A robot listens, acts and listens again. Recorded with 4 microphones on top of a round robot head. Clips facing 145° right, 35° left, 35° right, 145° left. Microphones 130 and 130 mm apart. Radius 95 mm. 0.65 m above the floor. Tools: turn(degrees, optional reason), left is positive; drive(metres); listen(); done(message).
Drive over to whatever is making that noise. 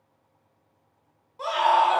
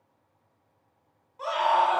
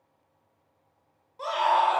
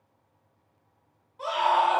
turn(degrees=-85, reason="The scream: 85° right.")
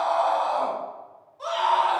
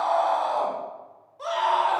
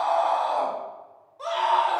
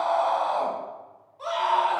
turn(degrees=10, reason="The scream is now 10° left.")
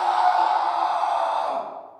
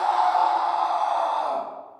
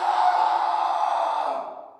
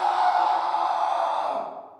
drive(metres=1.0)
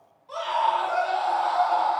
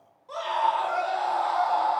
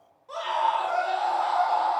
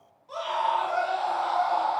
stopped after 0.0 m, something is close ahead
done("Blocked. The scream is further on, straight ahead.")